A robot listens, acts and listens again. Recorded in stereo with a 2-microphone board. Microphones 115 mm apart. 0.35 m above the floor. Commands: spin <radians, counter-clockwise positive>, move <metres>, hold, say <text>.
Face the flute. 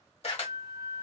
spin 0.79
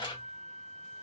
spin 1.48
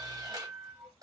say Found it: a flute, straight ahead, 1 to 2 m away.